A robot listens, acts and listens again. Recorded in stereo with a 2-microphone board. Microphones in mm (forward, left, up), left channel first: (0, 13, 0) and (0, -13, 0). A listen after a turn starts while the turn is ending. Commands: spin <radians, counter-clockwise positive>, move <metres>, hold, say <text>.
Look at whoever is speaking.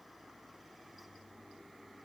hold
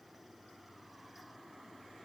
hold
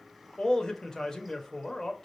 spin 0.35
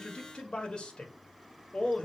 spin 2.36
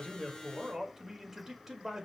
spin -0.17
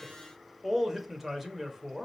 say Facing the man speaking, 1 to 2 m away.